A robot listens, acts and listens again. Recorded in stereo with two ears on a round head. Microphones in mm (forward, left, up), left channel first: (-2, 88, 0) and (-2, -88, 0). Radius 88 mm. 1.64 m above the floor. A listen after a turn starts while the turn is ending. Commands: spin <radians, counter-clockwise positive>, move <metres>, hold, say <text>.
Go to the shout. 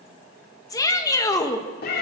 spin 0.35
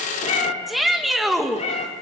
move 1.0
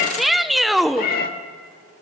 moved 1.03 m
move 1.0
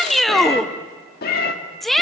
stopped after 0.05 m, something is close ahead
say Arrived at the shout, straight ahead.